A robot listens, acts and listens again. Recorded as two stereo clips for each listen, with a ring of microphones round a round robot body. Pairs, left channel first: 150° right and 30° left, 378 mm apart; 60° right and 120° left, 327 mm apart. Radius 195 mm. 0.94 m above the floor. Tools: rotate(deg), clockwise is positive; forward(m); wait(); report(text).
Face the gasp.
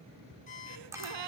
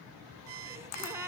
rotate(-40)
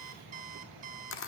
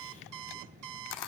report("I heard a gasp from this way, but can't make it out now.")